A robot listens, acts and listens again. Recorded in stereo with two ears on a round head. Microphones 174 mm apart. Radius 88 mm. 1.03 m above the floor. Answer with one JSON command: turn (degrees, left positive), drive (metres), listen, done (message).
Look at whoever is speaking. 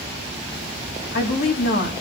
{"turn": 50}
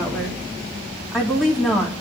{"done": "Facing the woman speaking."}